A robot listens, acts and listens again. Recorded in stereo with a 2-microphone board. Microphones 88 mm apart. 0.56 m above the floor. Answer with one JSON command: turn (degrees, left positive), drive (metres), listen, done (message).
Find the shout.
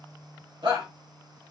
{"turn": -65}
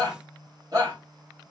{"turn": -40}
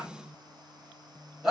{"done": "Facing the shout, 2 to 4 m away."}